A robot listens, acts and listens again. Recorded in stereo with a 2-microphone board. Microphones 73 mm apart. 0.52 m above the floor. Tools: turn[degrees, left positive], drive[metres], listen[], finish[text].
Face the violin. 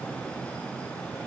Action: listen[]
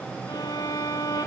Thought: The violin: about 60° left or 120° left.
Action: turn[60]
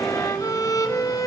Thought: So it is at 55° left.
Action: turn[55]
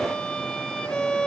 Thought: The violin is now 15° left.
Action: turn[15]
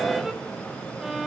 Action: finish[Facing the violin, 2 to 4 m away.]